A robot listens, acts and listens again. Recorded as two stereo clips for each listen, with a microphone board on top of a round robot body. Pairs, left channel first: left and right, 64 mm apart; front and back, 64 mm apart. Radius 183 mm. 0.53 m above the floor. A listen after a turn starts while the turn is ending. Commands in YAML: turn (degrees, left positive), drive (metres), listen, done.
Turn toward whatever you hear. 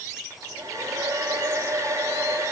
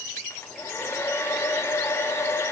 turn: -50
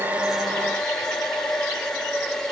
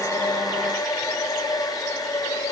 turn: 10
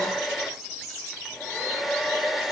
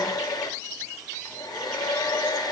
done: "Facing the hair dryer."